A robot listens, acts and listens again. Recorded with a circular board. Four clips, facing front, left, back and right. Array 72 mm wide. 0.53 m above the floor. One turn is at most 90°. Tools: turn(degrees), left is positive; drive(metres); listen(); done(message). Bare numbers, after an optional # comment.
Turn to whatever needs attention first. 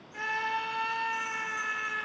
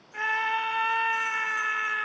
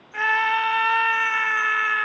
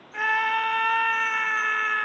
# The scream: 160° right.
turn(-90)
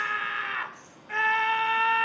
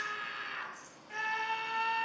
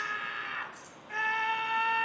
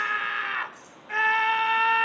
# The scream is now 65° right.
turn(-65)
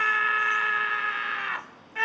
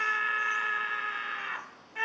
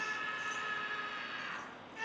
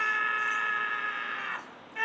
done("Facing the scream.")